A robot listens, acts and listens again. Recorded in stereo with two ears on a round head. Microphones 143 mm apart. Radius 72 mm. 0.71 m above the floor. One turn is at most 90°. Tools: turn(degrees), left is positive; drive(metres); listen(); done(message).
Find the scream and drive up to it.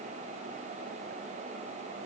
listen()
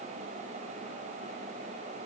listen()
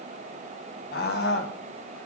turn(degrees=70)
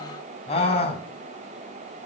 turn(degrees=40)
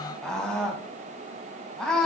drive(metres=1.0)
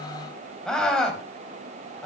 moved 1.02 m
drive(metres=1.0)
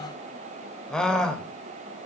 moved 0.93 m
drive(metres=1.0)
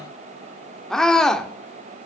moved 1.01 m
drive(metres=1.0)
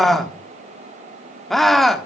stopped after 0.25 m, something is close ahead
done("I am next to the scream.")